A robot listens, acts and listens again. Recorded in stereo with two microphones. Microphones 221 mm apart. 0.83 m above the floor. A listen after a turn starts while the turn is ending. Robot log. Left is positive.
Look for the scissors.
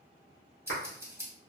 cmd yaw -30
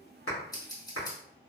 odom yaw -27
note: So it is at 15° left.
cmd yaw +15
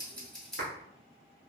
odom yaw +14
end: Found it: scissors, straight ahead.